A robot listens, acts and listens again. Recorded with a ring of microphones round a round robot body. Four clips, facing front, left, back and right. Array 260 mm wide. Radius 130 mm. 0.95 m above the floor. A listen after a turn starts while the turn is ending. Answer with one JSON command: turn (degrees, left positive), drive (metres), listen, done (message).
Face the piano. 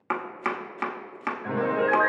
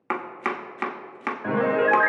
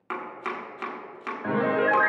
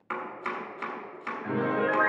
{"turn": 125}
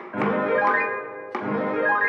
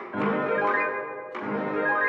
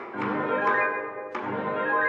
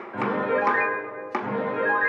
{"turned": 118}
{"done": "Facing the piano."}